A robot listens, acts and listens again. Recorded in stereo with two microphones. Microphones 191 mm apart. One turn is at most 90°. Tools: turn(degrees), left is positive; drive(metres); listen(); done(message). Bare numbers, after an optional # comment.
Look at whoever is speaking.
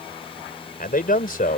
# The man speaking: about 50° left or 130° left.
turn(50)
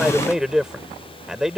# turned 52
done("Found it: a man speaking, straight ahead.")